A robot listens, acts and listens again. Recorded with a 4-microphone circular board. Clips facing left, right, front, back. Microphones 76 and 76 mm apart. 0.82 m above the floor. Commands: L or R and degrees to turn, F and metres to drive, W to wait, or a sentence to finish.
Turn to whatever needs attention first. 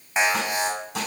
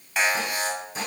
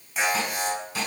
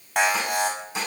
L155
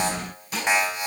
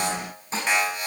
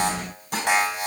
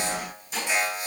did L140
L15
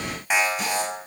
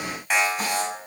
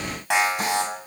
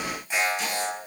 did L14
Facing the alarm.